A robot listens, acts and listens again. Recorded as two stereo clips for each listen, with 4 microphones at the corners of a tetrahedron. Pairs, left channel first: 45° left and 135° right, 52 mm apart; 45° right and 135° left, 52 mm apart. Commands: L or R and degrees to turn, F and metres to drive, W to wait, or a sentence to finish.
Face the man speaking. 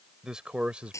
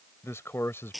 R70
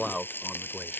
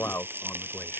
R55
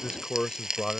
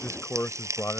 R30
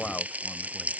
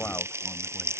W
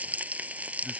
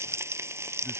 W
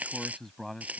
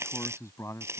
R40
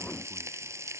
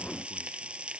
W
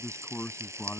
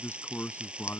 Found it: a man speaking, straight ahead.